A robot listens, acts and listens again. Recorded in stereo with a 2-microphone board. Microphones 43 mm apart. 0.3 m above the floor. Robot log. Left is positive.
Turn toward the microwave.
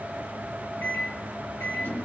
note: The microwave: about 45° left or 135° left.
cmd yaw +45
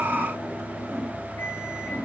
cmd idle
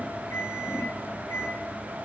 note: So it is at 90° left.
cmd yaw +90
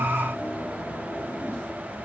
cmd idle
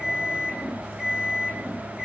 note: The microwave is now 10° right.
cmd yaw -10
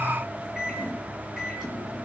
end: Found it: a microwave, straight ahead.